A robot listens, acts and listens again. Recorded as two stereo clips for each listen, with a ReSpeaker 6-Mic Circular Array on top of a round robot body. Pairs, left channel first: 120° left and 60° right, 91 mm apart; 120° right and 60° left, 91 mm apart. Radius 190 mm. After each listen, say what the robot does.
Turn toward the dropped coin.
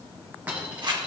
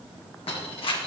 Turn 135° right.
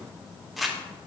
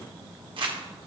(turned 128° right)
I heard a dropped coin from this way, but can't make it out now.